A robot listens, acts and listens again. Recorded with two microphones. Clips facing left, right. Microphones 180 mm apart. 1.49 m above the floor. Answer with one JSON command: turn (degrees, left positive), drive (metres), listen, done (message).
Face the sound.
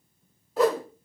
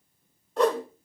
{"turn": 30}
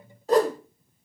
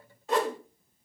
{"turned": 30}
{"turn": 145}
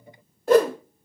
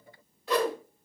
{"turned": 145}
{"turn": 50}
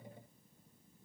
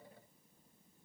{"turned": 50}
{"listen": true}
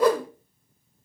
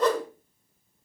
{"turn": 10}
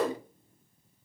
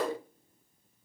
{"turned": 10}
{"done": "Facing the whoosh."}